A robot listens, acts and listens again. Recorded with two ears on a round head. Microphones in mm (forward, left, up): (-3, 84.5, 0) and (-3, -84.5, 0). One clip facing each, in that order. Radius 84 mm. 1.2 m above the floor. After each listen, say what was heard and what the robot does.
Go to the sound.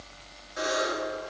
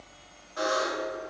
The buzzer: about 20° left or 160° left. Turn 20° left.
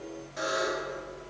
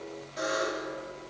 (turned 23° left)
Drive 1.0 m forward.
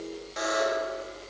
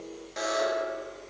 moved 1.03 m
Drive 1.0 m forward.
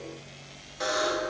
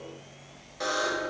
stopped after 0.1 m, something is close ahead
I am next to the buzzer.